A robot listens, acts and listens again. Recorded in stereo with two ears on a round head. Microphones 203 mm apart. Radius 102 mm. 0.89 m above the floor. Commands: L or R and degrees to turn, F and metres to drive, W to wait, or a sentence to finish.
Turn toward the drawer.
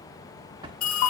R20
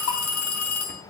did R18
W
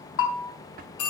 R140
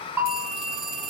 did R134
W
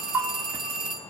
W
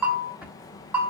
Facing where the drawer came from. I can't hear it now.